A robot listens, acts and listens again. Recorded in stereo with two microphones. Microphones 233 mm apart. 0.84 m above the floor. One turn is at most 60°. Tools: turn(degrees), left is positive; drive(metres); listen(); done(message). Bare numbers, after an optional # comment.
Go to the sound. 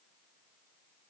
listen()
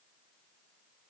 listen()
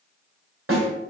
# The snare drum: about 65° right or 115° right.
turn(-60)
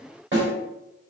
# So it is at 55° right.
turn(-55)
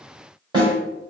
# The snare drum is now 20° right.
turn(-20)
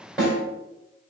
drive(1.0)
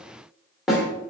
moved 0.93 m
drive(1.0)
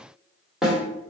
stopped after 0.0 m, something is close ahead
done("I am next to the snare drum.")